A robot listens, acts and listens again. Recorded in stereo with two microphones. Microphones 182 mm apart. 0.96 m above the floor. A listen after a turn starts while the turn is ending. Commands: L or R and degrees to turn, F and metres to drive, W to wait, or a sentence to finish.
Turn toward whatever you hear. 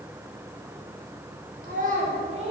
R35
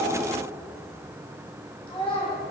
L30
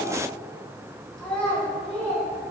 L10
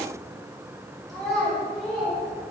Facing the child speaking, 2 to 4 m away.